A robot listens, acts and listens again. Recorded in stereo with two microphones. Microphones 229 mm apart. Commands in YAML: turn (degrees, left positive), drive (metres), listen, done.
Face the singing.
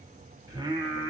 turn: -15
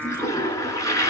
turn: 30
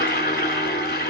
listen: true
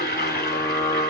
turn: 15
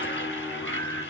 turn: 20
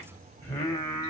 turn: 15
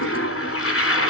listen: true
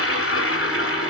listen: true
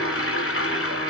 done: "I heard singing, but can't make it out now. It was about straight ahead or 150° left."